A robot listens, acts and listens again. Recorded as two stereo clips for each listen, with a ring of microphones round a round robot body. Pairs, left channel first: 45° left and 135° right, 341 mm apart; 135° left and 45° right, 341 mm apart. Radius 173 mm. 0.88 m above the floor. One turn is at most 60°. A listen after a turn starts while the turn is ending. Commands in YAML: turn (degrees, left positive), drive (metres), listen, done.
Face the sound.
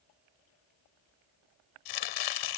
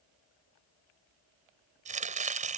turn: 25
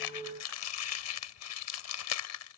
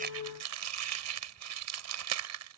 done: "Facing the chopping."